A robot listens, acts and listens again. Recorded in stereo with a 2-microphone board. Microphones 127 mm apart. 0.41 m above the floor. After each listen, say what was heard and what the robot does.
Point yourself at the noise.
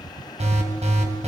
The alarm: about 60° right or 120° right. Turn 60° right.
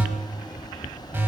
So it is at 20° right. Turn 20° right.
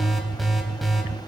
Facing the alarm, 2 to 4 m away.